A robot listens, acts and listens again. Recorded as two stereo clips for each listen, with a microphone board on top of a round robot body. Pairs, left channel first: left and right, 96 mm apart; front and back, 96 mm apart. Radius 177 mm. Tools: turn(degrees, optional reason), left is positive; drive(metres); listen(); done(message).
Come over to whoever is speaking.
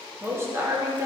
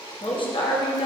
turn(degrees=-25, reason="The woman speaking: 25° right.")
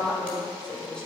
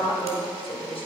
turn(degrees=10, reason="The woman speaking is now 10° left.")
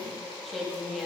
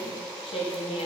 drive(metres=1.0)
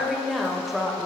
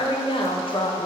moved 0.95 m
drive(metres=1.0)
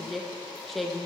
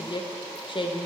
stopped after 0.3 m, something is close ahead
done("I am next to the woman speaking.")